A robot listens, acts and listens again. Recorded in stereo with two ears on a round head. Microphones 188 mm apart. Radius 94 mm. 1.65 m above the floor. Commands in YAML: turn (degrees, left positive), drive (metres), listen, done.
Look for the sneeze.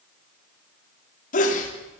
turn: 40
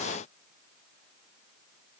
listen: true
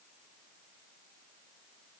done: "I heard a sneeze, but can't make it out now. It was about straight ahead or 100° left."